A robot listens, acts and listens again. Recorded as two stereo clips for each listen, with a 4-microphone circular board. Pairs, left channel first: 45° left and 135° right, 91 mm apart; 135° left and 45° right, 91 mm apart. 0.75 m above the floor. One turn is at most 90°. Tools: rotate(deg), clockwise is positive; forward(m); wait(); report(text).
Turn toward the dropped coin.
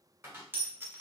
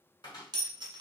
rotate(70)
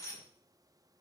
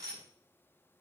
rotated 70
report("Facing the dropped coin.")